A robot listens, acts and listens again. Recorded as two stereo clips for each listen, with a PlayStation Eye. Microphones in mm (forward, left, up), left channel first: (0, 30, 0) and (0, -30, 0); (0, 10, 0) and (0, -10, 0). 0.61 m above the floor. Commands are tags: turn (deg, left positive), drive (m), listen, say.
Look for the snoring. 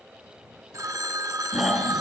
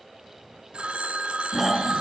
<turn deg="-30"/>
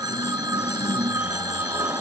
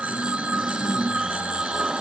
<turn deg="-145"/>
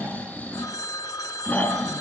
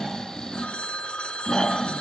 <turn deg="30"/>
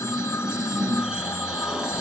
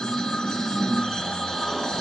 <turn deg="-10"/>
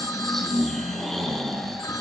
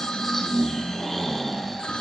<say>Found it: snoring, straight ahead, over 4 m away.</say>